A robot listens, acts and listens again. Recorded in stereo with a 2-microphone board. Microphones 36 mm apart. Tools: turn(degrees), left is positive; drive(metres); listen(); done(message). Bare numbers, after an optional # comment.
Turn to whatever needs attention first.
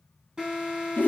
# The alarm: about 15° right or 165° right.
turn(-15)
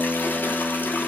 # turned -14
listen()
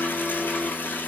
listen()
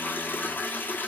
done("I heard an alarm, but can't make it out now. It was about 5° right or 150° right.")